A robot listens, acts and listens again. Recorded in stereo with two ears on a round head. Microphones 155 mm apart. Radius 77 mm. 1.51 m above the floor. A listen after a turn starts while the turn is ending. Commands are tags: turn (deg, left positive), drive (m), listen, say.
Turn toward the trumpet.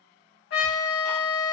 <turn deg="65"/>
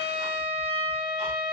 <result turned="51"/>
<turn deg="30"/>
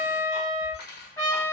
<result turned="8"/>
<turn deg="20"/>
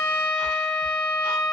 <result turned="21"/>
<say>Facing the trumpet.</say>